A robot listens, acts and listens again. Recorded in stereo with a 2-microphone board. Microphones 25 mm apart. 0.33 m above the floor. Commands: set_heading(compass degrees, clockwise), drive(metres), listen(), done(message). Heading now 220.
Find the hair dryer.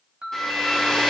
set_heading(205)
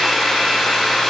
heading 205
done("Facing the hair dryer, 1 to 2 m away.")